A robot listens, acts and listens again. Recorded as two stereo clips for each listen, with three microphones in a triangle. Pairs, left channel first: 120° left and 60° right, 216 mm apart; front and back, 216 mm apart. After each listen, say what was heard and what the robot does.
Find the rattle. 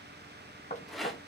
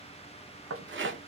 The rattle: 150° right. Turn 150° right.
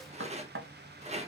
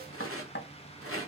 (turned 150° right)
Facing the rattle, under 1 m away.